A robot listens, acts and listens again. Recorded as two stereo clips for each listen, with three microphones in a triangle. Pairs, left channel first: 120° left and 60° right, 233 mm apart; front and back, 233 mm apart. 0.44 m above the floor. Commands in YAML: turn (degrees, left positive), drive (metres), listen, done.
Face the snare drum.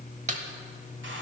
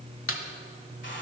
done: "Found it: a snare drum, straight ahead."